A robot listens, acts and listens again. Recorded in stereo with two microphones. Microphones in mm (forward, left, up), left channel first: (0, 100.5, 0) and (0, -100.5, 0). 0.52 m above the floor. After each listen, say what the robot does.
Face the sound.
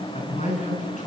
Turn 35° left.
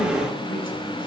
Keep listening.
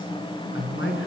Turn 100° left.
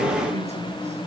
Keep listening.
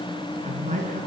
Turn 35° right.
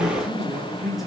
Found it: a man speaking, straight ahead.